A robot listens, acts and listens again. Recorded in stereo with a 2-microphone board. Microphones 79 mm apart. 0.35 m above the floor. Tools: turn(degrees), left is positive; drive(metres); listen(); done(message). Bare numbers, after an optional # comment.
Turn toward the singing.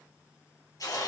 listen()
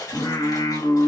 turn(90)
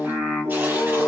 done("Found it: singing, straight ahead.")